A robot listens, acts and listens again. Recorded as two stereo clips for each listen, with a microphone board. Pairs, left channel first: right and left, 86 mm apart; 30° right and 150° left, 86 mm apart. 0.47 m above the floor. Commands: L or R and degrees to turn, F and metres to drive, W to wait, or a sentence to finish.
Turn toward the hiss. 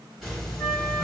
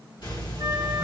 Found it: a hiss, straight ahead, 1 to 2 m away.